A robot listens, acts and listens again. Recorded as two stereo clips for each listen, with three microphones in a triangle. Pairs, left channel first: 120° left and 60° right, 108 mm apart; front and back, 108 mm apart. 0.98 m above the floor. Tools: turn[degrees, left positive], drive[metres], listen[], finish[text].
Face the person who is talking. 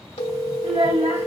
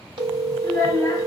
Thought: The child speaking: 60° right.
Action: turn[-60]
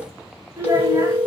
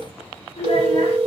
Action: finish[Found it: a child speaking, straight ahead, 1 to 2 m away.]